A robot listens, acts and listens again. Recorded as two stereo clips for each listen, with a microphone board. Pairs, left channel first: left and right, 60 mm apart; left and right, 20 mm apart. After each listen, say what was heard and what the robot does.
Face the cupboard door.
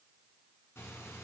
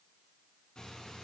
Keep listening.
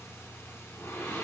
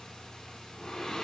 Keep listening.
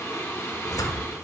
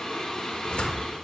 The cupboard door: about 65° left or 115° left. Turn 65° left.
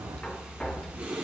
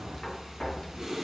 So it is at 20° left. Turn 20° left.
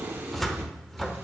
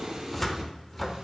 Facing the cupboard door, under 1 m away.